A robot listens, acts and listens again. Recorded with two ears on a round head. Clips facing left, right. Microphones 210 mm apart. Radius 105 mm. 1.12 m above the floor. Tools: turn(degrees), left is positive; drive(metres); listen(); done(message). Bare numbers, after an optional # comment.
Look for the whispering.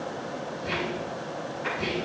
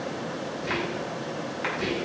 # The whispering: about 20° right or 160° right.
turn(-20)
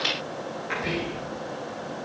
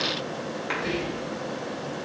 done("Facing the whispering.")